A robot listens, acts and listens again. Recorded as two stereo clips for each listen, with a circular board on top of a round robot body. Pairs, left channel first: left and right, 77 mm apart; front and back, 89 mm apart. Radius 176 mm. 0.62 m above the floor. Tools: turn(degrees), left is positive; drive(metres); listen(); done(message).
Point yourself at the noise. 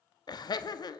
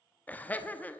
turn(degrees=70)
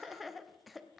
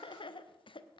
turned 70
done("Facing the laughter, 1 to 2 m away.")